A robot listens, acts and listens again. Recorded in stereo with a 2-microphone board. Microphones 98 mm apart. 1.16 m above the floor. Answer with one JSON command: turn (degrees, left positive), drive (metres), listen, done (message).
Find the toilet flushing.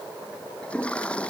{"turn": 30}
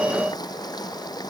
{"turn": 135}
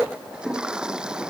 {"turn": -10}
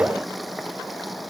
{"done": "Facing the toilet flushing."}